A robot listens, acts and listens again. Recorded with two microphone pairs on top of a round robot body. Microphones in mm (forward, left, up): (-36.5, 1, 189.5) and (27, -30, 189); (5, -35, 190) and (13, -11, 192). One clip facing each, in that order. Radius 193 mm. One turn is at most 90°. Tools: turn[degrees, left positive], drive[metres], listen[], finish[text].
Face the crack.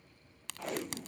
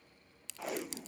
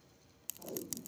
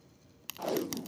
Thought: The crack: 120° left.
Action: turn[90]
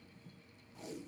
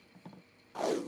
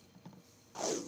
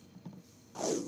Thought: Nothing new. It was at 30° left.
Action: turn[30]
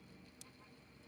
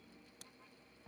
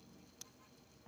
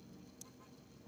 Action: finish[Facing where the crack came from. I can't hear it now.]